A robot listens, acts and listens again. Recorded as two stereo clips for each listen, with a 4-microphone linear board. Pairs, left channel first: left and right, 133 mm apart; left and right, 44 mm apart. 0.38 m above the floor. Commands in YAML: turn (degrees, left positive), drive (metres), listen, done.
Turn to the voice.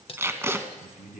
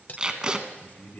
turn: 70
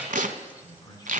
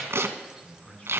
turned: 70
turn: 30
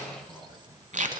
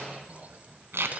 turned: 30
listen: true
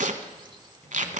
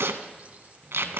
listen: true
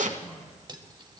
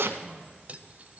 turn: 10
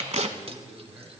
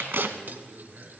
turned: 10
done: "Facing the man speaking."